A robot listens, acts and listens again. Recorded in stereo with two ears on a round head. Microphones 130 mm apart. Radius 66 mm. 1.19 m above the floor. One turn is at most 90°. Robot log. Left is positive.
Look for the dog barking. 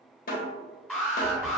note: The dog barking: about 25° right or 155° right.
cmd yaw -25
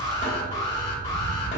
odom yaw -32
note: So it is at 115° right.
cmd yaw -90
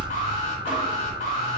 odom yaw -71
note: The dog barking is now 30° right.
cmd yaw -30
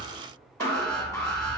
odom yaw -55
note: The dog barking is now 25° left.
cmd yaw +25
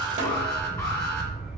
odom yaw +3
note: The dog barking is now 25° left.
cmd yaw +25
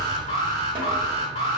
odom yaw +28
end: Facing the dog barking.